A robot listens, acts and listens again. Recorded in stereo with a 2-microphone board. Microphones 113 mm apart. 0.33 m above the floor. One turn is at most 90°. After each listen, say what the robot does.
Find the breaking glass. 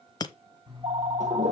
Turn 35° left.
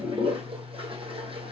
Keep listening.
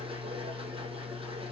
I heard breaking glass, but can't make it out now. It was about straight ahead or 110° left.